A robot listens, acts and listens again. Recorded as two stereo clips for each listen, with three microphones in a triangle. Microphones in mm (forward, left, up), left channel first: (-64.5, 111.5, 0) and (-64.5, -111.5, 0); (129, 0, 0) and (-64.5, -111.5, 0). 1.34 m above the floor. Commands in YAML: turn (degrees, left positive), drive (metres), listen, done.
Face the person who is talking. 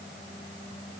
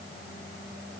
listen: true
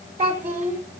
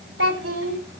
turn: -145
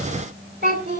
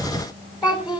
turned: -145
turn: -40
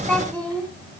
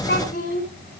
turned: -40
done: "Facing the child speaking, 2 to 4 m away."